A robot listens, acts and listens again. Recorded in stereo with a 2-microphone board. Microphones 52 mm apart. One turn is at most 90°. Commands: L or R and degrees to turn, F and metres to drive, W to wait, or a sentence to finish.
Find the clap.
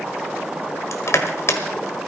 W
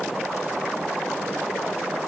W
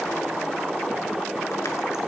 I can't make out a clap, only crushing.